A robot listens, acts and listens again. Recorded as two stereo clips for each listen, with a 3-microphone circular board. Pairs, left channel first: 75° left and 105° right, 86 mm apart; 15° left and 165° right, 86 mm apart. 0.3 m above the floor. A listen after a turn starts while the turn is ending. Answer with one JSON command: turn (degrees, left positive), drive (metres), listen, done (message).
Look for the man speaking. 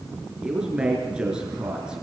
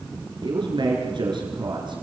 {"turn": 175}
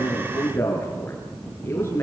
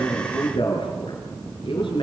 {"turn": 15}
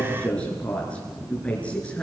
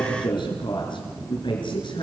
{"done": "Facing the man speaking, over 4 m away."}